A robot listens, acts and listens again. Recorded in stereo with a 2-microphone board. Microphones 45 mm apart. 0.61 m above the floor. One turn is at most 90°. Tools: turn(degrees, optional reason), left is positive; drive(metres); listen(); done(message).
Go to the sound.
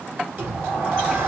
turn(degrees=-50, reason="The sliding door: about 50° right or 130° right.")
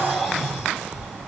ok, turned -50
drive(metres=1.0)
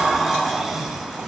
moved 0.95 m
turn(degrees=-10, reason="The sliding door is now 10° right.")
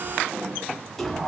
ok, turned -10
drive(metres=1.0)
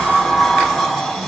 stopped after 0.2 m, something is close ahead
done("I am next to the sliding door.")